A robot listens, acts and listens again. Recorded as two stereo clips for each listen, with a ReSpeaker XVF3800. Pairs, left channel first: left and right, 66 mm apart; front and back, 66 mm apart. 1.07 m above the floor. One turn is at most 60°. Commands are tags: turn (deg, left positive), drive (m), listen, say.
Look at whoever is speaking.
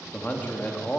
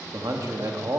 <turn deg="60"/>
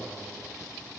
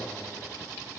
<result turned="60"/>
<turn deg="60"/>
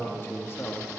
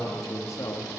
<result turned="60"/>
<turn deg="35"/>
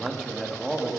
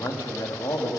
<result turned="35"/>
<say>Found it: a man speaking, straight ahead.</say>